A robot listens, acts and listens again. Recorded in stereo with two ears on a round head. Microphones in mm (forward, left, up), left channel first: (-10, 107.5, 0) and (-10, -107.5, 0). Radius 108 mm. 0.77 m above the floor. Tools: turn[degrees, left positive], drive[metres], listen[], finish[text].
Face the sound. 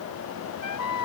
Action: turn[90]
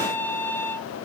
Thought: So it is at 10° left.
Action: turn[10]
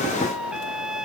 Action: finish[Found it: a trumpet, straight ahead.]